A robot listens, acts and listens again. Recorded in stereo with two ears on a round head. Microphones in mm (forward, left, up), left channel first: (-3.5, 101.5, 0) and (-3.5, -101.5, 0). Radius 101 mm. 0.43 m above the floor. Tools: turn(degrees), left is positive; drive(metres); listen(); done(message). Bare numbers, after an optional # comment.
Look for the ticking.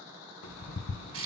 turn(90)
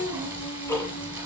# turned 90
# So it is at 15° left.
turn(15)
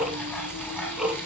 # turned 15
done("Facing the ticking.")